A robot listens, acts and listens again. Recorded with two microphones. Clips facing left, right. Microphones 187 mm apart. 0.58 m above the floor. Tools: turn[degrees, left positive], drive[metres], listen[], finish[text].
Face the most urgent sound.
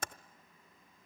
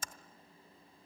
Action: listen[]
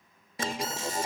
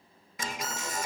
Thought: The alarm: about 30° left or 150° left.
Action: turn[30]
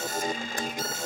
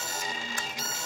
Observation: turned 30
Thought: So it is at 115° left.
Action: turn[115]
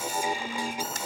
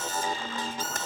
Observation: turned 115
Thought: The alarm is now 15° left.
Action: turn[15]
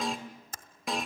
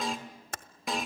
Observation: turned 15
Action: finish[Facing the alarm, 2 to 4 m away.]